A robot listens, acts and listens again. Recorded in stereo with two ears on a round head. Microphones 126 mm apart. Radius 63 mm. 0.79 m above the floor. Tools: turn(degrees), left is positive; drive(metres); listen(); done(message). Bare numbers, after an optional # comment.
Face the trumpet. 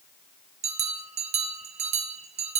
listen()
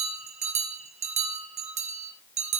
listen()
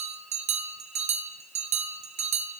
done("I can't make out a trumpet to turn to.")